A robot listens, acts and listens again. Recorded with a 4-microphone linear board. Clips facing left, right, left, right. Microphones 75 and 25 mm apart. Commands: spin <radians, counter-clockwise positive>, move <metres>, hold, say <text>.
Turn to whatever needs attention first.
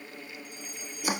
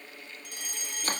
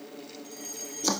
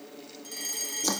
spin -1.57
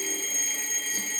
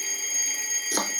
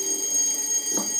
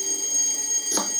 say Facing the fire alarm.